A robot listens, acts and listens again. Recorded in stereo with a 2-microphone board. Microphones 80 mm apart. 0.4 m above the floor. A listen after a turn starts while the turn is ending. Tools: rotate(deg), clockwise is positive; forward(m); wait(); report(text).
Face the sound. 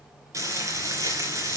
rotate(40)
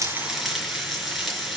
report("Facing the frying.")